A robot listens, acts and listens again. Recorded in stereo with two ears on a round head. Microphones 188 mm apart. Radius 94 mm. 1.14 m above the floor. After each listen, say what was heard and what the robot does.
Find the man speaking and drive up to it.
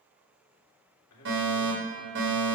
Turn 90° left.
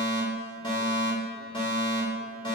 Keep listening.
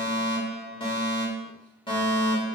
Keep listening.
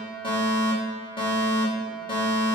Facing where the man speaking came from. I can't hear it now. I did not reach it.